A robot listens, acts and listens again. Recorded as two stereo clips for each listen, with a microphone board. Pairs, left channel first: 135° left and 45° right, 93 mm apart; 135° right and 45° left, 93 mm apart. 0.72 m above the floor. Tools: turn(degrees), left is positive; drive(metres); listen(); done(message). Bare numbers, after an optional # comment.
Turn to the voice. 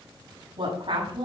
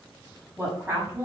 # The woman speaking: 25° right.
turn(-25)
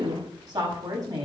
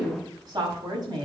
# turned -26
done("Facing the woman speaking, over 4 m away.")